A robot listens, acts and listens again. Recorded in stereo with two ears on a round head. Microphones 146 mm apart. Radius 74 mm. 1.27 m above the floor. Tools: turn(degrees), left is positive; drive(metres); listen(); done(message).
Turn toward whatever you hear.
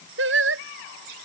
turn(degrees=-90)
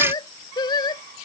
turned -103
turn(degrees=25)
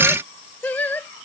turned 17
turn(degrees=10)
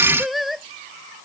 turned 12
done("Facing the singing.")